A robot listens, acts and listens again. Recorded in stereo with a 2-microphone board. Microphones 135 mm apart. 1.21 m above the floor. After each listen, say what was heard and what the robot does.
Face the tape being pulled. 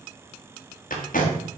Turn 90° left.
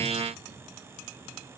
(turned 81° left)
Nothing new. It was at 10° left. Turn 10° left.
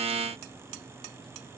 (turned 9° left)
Keep listening.
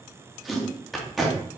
Found it: tape being pulled, straight ahead, 1 to 2 m away.